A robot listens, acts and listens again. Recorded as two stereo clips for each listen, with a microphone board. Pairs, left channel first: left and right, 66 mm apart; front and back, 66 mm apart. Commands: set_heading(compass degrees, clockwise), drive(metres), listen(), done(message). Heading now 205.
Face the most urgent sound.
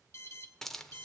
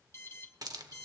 set_heading(160)
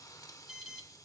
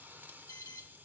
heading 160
set_heading(170)
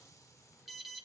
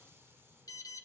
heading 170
done("Facing the alarm.")